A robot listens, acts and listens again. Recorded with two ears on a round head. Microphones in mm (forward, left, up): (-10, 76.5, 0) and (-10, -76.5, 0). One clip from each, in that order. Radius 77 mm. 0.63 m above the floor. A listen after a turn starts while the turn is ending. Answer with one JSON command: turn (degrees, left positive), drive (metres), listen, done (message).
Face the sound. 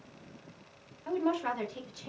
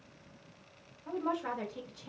{"turn": 65}
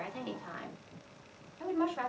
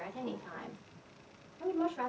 {"turn": 50}
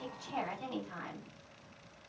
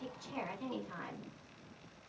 {"turn": 10}
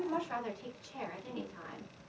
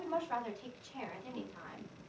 {"done": "Facing the woman speaking, 2 to 4 m away."}